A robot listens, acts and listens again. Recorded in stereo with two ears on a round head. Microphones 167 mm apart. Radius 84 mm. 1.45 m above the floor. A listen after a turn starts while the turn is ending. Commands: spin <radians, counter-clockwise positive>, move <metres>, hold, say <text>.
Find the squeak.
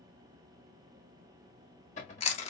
hold
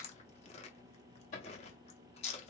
hold
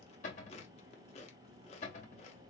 say I can't make out a squeak, only chewing and a cupboard door.